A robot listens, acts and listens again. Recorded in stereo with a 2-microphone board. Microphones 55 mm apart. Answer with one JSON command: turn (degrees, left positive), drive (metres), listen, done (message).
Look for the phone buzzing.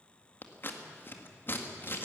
{"listen": true}
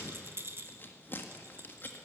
{"listen": true}
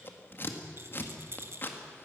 {"done": "I can't make out a phone buzzing to turn to."}